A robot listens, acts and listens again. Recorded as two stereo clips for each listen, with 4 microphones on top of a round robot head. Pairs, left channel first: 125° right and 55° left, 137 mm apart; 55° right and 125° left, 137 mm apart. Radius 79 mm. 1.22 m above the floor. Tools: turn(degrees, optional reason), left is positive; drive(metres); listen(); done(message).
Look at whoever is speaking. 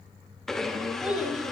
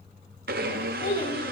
turn(degrees=-30, reason="The child speaking: 30° right.")
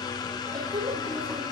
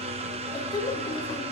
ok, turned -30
done("Facing the child speaking.")